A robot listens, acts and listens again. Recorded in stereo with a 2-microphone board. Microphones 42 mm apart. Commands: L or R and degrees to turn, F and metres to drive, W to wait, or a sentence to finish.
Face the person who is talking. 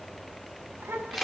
R90
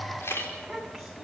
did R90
Facing the child speaking.